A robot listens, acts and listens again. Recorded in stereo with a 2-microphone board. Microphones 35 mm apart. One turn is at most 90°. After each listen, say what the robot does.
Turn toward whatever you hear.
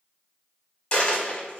Turn 30° left.
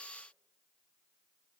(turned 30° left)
Keep listening.
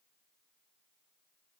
I heard a dropped coin, but can't make it out now. It was about straight ahead or 120° left.